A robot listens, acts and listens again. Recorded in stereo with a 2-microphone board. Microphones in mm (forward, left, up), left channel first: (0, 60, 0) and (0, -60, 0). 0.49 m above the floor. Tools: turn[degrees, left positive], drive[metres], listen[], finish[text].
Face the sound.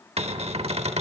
Thought: The cupboard door: about 60° right or 120° right.
Action: turn[-60]
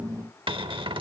Thought: So it is at 50° right.
Action: turn[-50]
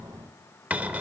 Thought: The cupboard door is now 15° right.
Action: turn[-15]
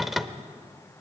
Action: finish[Facing the cupboard door, under 1 m away.]